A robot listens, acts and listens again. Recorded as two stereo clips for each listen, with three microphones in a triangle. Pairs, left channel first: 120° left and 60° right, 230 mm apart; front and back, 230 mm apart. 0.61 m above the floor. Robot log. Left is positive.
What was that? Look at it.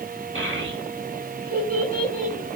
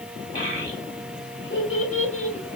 note: The child speaking: 15° right.
cmd yaw -15
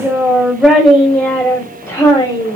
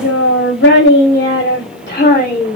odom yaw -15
note: The child speaking is now 65° left.
cmd yaw +65
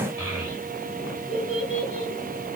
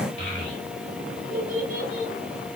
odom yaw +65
note: The child speaking is now 40° left.
cmd yaw +40
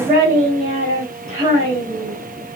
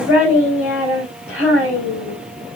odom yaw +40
note: The child speaking is now 10° left.
cmd yaw +10
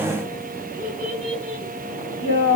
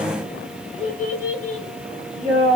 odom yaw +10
end: Facing the child speaking.